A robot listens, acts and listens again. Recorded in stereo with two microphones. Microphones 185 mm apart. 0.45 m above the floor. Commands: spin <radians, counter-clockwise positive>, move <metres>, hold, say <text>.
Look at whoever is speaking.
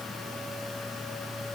hold
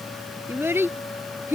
spin -0.52
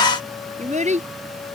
spin -2.44
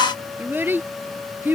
spin -0.17
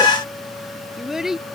say Found it: a child speaking, straight ahead.